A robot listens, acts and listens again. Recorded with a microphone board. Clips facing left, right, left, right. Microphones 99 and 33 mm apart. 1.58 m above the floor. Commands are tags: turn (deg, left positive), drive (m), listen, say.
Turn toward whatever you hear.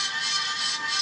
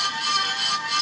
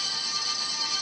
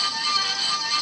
<listen/>
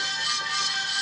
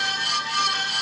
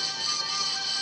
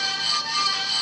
<listen/>
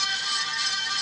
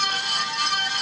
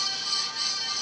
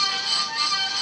<say>I can't make out anything to turn to.</say>